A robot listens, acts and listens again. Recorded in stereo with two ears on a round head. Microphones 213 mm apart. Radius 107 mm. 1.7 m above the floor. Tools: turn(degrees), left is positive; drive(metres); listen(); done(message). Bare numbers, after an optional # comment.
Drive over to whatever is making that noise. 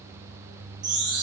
# The chime: about 50° right or 130° right.
turn(-50)
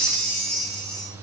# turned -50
drive(1.0)
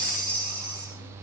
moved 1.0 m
drive(1.0)
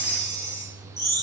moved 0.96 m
# The chime is now 10° left.
turn(10)
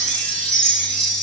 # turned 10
drive(1.0)
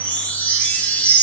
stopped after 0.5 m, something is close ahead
done("I am next to the chime.")